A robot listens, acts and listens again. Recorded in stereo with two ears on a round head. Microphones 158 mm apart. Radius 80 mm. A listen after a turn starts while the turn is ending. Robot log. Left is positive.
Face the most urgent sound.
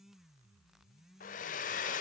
cmd idle
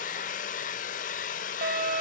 note: The fire alarm: about 55° right or 125° right.
cmd yaw -55
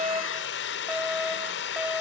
end: Facing the fire alarm, over 4 m away.